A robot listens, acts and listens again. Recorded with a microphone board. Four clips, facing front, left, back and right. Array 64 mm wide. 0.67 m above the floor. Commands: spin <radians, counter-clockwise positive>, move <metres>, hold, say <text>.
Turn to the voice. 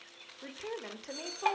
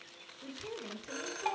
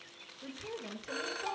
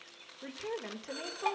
spin -0.79
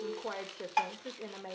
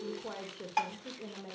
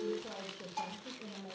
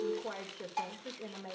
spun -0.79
say Facing the woman speaking, 2 to 4 m away.